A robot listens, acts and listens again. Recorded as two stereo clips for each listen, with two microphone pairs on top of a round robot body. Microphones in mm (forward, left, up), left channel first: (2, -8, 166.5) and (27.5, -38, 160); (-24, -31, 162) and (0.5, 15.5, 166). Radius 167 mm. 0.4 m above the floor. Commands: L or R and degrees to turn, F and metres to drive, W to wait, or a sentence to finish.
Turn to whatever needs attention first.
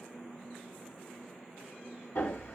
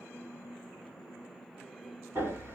W
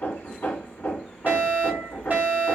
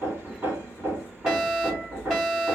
R15
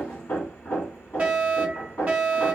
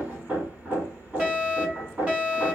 Facing the fire alarm.